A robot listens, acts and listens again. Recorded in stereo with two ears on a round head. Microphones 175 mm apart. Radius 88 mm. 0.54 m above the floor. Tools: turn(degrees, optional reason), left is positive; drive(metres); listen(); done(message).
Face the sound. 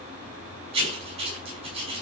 turn(degrees=-30, reason="The writing: about 30° right or 150° right.")
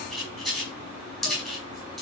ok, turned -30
done("Found it: writing, straight ahead.")